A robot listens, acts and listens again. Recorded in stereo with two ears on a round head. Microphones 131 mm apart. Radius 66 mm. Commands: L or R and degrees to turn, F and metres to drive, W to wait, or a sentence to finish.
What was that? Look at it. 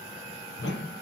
L90
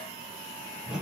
Found it: a whoosh, straight ahead.